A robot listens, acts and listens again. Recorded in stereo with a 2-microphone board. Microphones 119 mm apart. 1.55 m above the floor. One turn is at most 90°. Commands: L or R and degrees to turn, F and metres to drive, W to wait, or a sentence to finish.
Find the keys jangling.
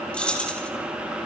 L30
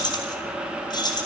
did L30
L90
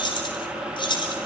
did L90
L45
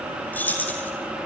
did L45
L15
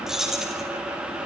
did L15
Facing the keys jangling, over 4 m away.